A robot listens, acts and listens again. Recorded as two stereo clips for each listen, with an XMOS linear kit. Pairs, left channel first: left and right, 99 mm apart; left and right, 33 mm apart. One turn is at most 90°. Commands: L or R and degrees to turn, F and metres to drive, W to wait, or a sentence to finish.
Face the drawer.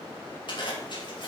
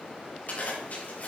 W
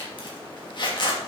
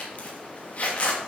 W
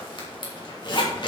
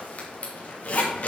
I can't make out a drawer, only a zipper.